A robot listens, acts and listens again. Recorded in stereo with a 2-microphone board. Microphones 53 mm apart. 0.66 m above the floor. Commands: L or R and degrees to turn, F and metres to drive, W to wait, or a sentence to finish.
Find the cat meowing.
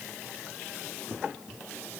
W
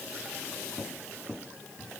W
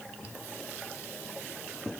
I can't make out a cat meowing.